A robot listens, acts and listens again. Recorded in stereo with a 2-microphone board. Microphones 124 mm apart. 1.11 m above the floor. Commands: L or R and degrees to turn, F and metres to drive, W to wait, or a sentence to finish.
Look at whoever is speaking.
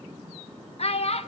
L55
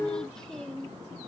W
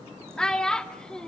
Facing the child speaking.